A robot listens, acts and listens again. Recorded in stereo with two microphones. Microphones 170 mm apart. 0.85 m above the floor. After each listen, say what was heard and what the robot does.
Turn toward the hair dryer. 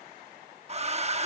The hair dryer: about 40° right or 140° right. Turn 40° right.
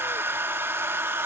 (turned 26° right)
So it is at 15° right. Turn 15° right.
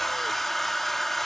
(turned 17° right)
Facing the hair dryer.